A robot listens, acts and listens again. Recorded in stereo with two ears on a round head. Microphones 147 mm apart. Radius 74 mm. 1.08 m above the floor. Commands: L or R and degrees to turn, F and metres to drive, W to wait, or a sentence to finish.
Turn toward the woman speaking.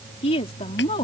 L30
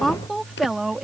Found it: a woman speaking, straight ahead.